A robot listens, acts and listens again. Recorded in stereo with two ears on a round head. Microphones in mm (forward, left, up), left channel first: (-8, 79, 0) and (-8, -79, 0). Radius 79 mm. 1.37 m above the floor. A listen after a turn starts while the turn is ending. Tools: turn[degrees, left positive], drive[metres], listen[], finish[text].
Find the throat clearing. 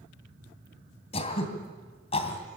Thought: The throat clearing: about 35° left or 145° left.
Action: turn[35]
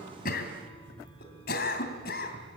Thought: So it is at 110° left.
Action: turn[110]
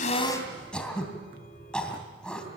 Action: finish[Facing the throat clearing, 2 to 4 m away.]